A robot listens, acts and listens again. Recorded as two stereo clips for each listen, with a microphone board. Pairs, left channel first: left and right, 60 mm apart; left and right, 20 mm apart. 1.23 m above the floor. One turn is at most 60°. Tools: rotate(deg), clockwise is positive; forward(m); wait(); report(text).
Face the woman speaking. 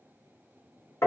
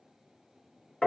wait()
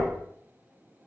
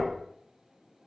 wait()
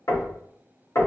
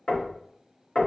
report("I can't make out a woman speaking, only knocking.")